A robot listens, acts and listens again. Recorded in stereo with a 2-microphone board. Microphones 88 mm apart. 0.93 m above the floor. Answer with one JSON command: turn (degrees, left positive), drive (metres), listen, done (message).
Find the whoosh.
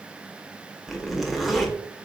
{"listen": true}
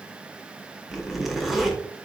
{"listen": true}
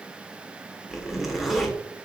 {"done": "I can't make out a whoosh, only a zipper."}